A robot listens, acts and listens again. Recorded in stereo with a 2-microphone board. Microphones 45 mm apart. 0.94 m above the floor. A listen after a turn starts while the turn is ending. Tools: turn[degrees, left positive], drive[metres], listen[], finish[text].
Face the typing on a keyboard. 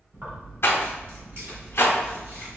Action: listen[]
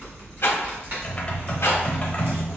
Thought: The typing on a keyboard: about 30° left or 150° left.
Action: turn[30]
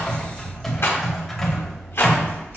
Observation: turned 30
Thought: So it is at 10° left.
Action: turn[10]
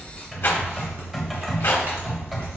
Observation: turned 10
Action: finish[Found it: typing on a keyboard, straight ahead, under 1 m away.]